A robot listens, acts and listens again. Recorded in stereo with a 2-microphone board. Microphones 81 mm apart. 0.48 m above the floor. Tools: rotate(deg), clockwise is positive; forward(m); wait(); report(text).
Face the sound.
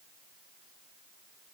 wait()
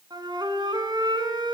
rotate(65)
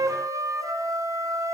rotate(45)
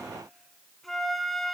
report("Found it: a flute, straight ahead, 1 to 2 m away.")